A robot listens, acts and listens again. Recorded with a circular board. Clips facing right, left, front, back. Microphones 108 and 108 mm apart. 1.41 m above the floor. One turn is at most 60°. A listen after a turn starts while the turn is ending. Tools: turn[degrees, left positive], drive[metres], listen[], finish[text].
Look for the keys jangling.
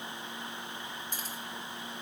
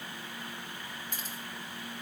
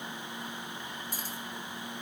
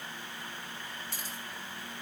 Thought: The keys jangling: 40° right.
Action: turn[-40]
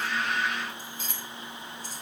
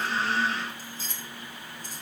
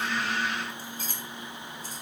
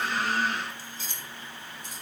Thought: The keys jangling is now 55° left.
Action: turn[55]
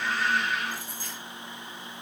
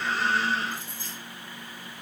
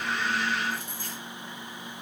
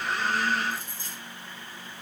Thought: The keys jangling is now 30° left.
Action: turn[30]
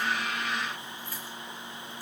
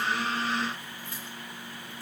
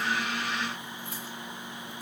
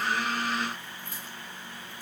Thought: The keys jangling is now 25° left.
Action: turn[25]
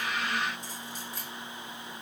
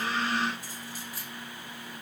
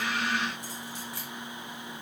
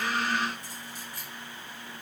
Action: finish[Facing the keys jangling, 2 to 4 m away.]